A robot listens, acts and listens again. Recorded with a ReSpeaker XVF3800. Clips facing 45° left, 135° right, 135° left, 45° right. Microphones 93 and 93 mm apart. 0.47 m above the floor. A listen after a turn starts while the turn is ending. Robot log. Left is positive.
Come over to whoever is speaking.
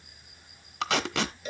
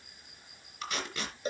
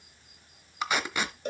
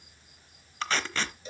cmd idle
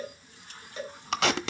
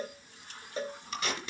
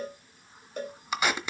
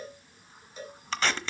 cmd idle
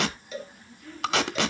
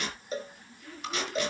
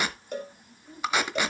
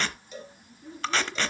note: The child speaking: 50° right.
cmd yaw -50
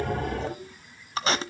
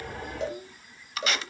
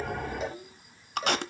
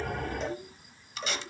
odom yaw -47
cmd fwd 1.0
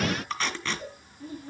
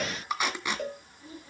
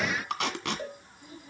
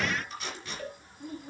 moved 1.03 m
cmd fwd 1.0
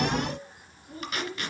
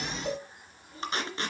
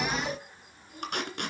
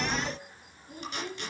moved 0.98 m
cmd fwd 1.0
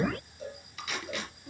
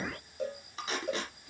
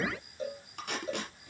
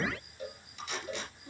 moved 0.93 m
cmd fwd 1.0
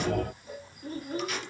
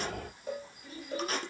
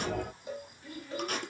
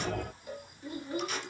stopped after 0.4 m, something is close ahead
note: The child speaking is now 15° left.
cmd yaw +15
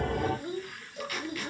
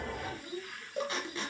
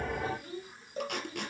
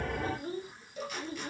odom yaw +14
end: I am next to the child speaking.